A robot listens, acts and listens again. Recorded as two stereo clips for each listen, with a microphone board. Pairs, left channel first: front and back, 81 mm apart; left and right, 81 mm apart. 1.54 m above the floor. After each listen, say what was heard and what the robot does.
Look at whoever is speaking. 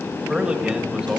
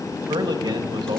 The man speaking: 100° right. Turn 100° right.
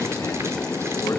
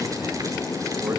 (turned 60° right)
Nothing new. It was at 40° right. Turn 40° right.
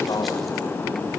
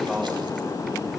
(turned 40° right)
Keep listening.
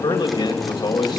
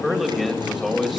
Found it: a man speaking, straight ahead.